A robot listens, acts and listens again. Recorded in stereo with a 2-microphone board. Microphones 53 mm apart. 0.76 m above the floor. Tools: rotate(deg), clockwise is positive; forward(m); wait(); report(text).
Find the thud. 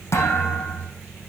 rotate(-55)
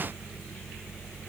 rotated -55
wait()
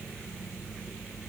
report("I heard a thud, but can't make it out now. It was about straight ahead or 70° left.")